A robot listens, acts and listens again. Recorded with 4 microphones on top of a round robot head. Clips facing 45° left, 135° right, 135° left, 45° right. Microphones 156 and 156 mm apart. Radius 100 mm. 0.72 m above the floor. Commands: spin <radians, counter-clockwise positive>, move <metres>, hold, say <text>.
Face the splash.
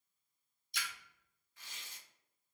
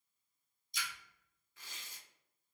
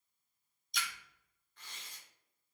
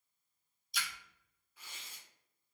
spin 0.70
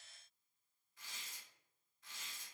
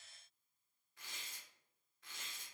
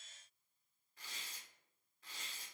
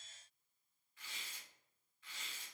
say I heard a splash from this way, but can't make it out now.